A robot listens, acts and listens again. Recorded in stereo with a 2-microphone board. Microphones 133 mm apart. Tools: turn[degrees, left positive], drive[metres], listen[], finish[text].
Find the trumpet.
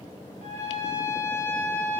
Thought: The trumpet: about 65° right or 115° right.
Action: turn[-65]
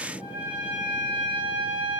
Thought: So it is at 10° right.
Action: turn[-10]
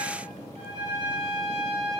Action: finish[Found it: a trumpet, straight ahead.]